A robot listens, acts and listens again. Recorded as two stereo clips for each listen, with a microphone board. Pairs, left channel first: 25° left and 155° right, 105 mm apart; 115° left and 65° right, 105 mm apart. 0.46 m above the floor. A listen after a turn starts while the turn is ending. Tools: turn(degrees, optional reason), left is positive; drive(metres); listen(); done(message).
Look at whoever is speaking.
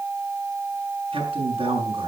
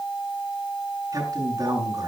turn(degrees=-125, reason="The man speaking: 125° right.")
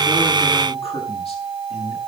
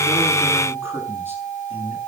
done("Facing the man speaking.")